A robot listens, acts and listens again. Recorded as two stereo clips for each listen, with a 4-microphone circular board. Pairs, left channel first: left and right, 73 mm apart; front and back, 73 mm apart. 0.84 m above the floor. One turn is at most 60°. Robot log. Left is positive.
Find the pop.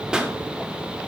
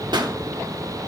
note: The pop: 170° right.
cmd yaw -60
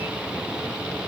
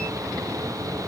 note: Nothing new. It was at 110° right.
cmd yaw -60
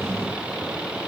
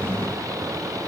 note: Nothing new. It was at 50° right.
cmd yaw -50
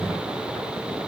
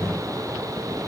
end: Facing where the pop came from. I can't hear it now.